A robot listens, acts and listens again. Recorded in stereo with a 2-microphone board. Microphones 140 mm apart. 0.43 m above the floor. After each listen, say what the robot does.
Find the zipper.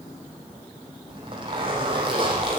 Turn 35° right.
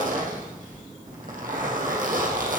Turn 110° right.
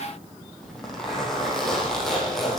Facing the zipper, over 4 m away.